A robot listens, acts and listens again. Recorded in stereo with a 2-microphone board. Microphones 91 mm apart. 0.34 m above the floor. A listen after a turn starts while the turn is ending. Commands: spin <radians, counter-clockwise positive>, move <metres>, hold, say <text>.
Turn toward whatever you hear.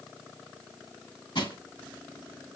spin 1.22
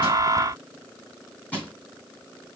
spin 0.35
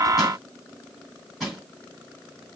say Facing the crushing, 2 to 4 m away.